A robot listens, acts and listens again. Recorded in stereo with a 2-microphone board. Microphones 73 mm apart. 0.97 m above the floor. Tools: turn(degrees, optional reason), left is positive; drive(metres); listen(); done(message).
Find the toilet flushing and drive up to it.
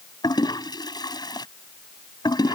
turn(degrees=70, reason="The toilet flushing: about 70° left or 110° left.")
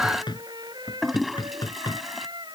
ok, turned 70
drive(metres=1.0)
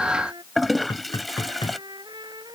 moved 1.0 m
drive(metres=1.0)
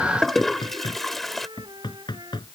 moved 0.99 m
drive(metres=1.0)
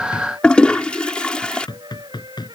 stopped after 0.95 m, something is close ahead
turn(degrees=15, reason="The toilet flushing is now 15° left.")
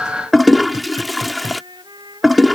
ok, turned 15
done("Arrived at the toilet flushing, straight ahead.")